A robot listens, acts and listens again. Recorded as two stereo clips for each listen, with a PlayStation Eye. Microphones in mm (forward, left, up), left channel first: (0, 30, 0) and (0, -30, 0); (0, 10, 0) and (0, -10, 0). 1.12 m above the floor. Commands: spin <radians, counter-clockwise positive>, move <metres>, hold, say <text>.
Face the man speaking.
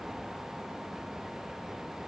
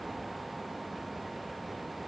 hold
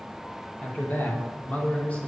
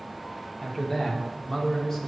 spin 0.44
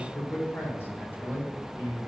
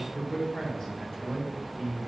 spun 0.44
spin 0.61
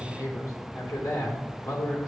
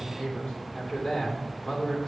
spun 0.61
spin 2.01
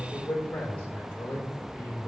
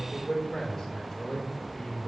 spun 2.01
spin 0.44
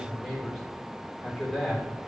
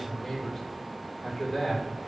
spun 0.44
say Facing the man speaking, 2 to 4 m away.